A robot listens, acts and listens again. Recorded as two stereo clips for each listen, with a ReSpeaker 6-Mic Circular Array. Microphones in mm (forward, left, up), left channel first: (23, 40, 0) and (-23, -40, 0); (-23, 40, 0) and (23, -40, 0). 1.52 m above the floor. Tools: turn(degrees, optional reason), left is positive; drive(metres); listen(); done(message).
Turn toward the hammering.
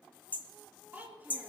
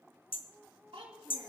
turn(degrees=130, reason="The hammering: 130° left.")
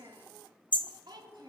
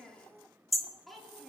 turn(degrees=30, reason="The hammering is now 30° left.")
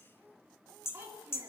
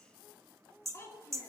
done("Found it: hammering, straight ahead.")